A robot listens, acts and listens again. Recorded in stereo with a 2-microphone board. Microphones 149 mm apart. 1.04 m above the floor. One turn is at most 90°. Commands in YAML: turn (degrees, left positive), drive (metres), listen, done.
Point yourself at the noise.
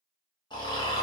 turn: 30
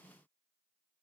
listen: true
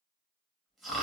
done: "Found it: snoring, straight ahead."